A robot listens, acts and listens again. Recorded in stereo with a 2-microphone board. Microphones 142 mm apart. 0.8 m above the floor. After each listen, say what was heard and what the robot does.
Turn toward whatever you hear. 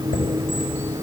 The chime: about 70° left or 110° left. Turn 70° left.
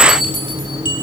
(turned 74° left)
So it is at 35° left. Turn 35° left.
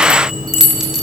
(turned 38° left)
Facing the chime, over 4 m away.